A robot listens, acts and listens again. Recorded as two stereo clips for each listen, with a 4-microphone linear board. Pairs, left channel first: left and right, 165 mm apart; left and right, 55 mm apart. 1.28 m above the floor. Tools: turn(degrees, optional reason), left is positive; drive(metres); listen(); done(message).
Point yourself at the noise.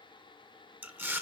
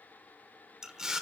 turn(degrees=-30)
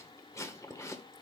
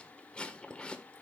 turn(degrees=20, reason="So it is at 20° left.")
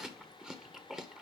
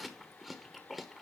done("Facing the chewing, 1 to 2 m away.")